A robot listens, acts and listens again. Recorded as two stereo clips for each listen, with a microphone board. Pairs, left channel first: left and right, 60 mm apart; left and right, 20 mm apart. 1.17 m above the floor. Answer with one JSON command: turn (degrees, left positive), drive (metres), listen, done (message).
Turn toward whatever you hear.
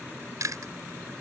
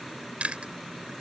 {"turn": -70}
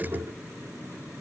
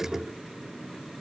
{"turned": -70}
{"listen": true}
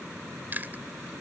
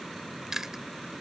{"turn": -35}
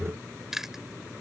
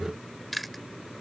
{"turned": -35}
{"done": "Facing the chewing."}